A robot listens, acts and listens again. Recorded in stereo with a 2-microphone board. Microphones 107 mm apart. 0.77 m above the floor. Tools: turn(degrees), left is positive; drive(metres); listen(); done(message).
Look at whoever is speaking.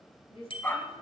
turn(degrees=65)
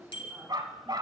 listen()
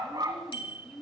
done("Found it: a woman speaking, straight ahead.")